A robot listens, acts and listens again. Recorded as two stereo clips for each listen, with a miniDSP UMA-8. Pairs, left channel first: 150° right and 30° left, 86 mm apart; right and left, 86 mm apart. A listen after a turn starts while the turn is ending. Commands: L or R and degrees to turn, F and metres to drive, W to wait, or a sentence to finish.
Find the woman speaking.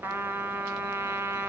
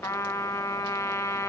W
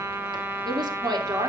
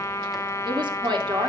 L65
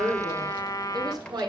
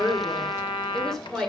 Facing the woman speaking.